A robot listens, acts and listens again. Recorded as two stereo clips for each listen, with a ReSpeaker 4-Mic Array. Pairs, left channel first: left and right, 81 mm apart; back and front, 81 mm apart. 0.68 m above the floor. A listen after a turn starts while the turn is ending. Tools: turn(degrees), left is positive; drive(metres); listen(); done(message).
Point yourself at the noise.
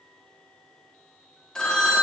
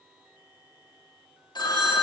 turn(degrees=170)
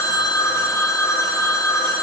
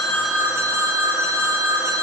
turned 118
turn(degrees=50)
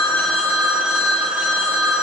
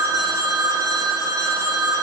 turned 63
turn(degrees=-10)
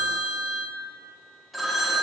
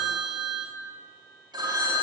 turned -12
done("Found it: a phone ringing, straight ahead, under 1 m away.")